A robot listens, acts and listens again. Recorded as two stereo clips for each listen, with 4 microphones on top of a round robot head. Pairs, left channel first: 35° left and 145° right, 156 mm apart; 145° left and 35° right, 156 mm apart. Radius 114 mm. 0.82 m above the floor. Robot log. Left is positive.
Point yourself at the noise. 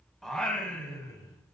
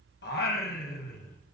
note: The singing: 105° left.
cmd yaw +105
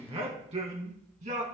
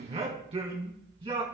note: The singing is now 95° right.
cmd yaw -95
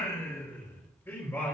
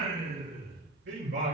note: The singing is now 40° right.
cmd yaw -40
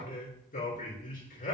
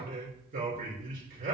end: Found it: singing, straight ahead.